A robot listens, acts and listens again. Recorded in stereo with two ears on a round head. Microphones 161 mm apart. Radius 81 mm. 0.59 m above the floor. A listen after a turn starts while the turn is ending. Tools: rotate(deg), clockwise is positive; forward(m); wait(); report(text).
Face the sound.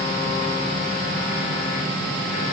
wait()
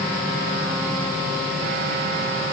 wait()
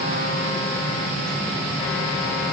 report("I can't make out anything to turn to.")